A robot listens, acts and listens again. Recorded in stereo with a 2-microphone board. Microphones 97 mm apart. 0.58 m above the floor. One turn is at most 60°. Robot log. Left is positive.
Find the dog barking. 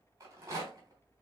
cmd idle
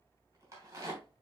cmd idle
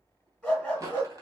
cmd yaw +30
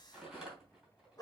note: So it is at 145° left.
cmd yaw +60
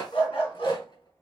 note: The dog barking is now 85° left.
cmd yaw +60
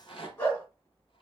note: The dog barking is now 30° left.
cmd yaw +30
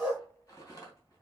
end: Facing the dog barking, 2 to 4 m away.